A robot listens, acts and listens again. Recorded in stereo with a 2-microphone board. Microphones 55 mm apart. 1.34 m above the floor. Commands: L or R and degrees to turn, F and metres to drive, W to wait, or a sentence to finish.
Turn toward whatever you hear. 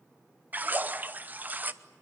R30
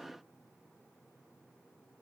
W
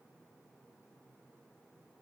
I heard a splash, but can't make it out now. It was about straight ahead or 120° right.